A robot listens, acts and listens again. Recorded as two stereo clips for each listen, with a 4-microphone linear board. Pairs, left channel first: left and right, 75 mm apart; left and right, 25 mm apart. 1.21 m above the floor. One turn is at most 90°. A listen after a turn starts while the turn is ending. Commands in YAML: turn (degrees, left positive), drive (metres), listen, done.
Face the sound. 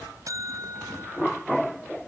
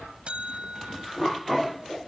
turn: -50
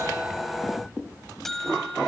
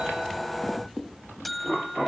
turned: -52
done: "Found it: a buzzer, straight ahead."